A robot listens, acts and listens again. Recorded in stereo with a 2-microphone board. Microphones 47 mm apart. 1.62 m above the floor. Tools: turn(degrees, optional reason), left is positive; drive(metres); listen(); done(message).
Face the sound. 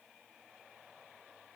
listen()
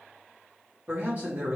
turn(degrees=-35, reason="The man speaking: about 35° right or 145° right.")
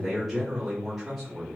done("Facing the man speaking.")